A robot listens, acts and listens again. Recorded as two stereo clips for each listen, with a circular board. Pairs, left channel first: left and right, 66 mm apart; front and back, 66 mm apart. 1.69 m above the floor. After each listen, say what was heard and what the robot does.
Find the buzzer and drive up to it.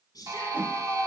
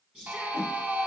The buzzer: 115° right. Turn 115° right.
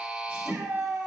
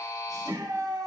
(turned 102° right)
The buzzer is now 15° right. Turn 15° right.
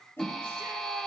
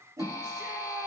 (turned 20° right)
Drive 1.0 m forward.
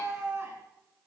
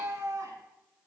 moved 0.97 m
Keep listening.
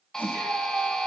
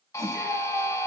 The buzzer is now 15° left. Turn 15° left.
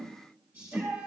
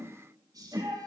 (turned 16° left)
Keep listening.
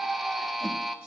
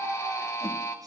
Drive 1.0 m forward.
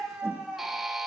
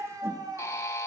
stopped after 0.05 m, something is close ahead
Arrived at the buzzer, straight ahead.